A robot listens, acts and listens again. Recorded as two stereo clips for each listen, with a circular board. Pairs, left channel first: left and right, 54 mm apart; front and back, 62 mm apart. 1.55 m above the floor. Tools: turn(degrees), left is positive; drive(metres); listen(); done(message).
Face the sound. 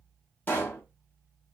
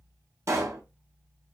turn(degrees=145)
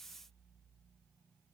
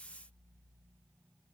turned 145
done("Facing where the pop came from. I can't hear it now.")